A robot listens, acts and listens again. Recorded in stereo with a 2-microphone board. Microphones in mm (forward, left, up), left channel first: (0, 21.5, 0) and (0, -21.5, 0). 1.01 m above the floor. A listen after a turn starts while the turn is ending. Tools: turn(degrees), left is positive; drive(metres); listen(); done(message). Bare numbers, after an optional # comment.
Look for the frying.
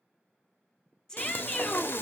# The frying: about 60° left or 120° left.
turn(60)
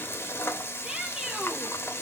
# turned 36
# So it is at 80° left.
turn(80)
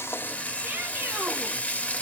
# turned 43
# The frying is now 40° left.
turn(40)
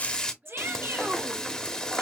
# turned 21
# The frying is now 20° left.
turn(20)
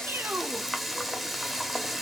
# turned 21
done("Facing the frying, 1 to 2 m away.")